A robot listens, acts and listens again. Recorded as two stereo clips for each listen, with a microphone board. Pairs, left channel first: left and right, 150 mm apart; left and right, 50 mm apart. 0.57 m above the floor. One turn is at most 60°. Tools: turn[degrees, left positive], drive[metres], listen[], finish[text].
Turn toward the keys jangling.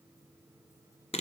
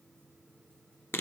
Action: listen[]
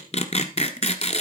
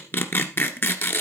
Action: listen[]
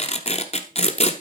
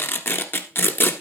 Action: finish[I can't make out keys jangling to turn to.]